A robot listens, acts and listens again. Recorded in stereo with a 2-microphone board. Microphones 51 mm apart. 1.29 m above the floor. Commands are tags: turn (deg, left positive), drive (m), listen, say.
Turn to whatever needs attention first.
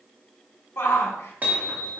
<turn deg="60"/>
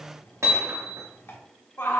<turn deg="55"/>
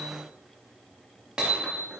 <listen/>
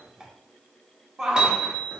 <turn deg="-15"/>
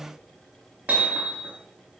<listen/>
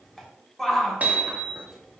<say>Found it: a shout, straight ahead.</say>